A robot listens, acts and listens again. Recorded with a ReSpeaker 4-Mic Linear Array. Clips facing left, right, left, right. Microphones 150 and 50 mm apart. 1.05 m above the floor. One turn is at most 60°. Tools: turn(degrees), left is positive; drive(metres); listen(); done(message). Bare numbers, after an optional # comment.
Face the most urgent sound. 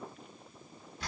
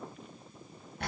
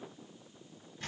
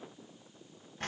listen()
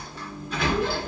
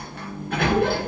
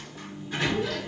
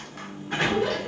listen()
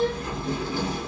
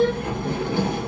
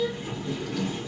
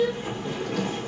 done("I can't make out anything urgent to turn to.")